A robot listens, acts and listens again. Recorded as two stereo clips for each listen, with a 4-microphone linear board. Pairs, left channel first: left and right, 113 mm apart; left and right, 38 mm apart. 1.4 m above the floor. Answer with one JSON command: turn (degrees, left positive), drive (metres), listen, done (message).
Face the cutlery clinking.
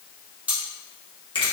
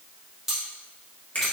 {"turn": -30}
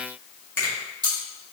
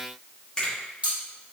{"turn": -135}
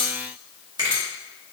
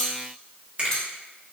{"turn": 25}
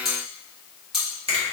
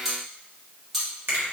{"done": "Found it: cutlery clinking, straight ahead, 1 to 2 m away."}